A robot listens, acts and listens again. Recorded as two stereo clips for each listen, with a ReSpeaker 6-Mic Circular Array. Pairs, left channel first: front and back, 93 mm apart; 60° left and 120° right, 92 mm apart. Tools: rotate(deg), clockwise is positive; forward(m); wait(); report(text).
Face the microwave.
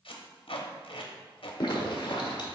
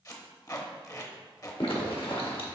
wait()
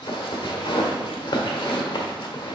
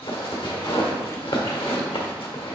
wait()
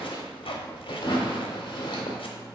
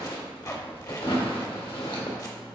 rotate(-95)
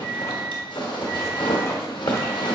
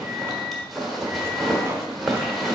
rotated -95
rotate(-25)
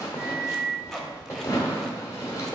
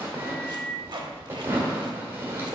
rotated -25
report("Found it: a microwave, straight ahead, 1 to 2 m away.")